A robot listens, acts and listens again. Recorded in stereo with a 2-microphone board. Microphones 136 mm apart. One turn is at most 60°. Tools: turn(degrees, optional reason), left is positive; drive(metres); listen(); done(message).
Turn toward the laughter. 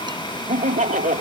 turn(degrees=-60)
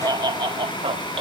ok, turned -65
turn(degrees=-45, reason="So it is at 45° right.")
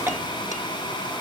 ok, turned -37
turn(degrees=-10, reason="Nothing new. It was at 10° right.")
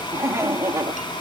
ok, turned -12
turn(degrees=-25, reason="The laughter is now 25° right.")
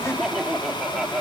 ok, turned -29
done("Found it: laughter, straight ahead.")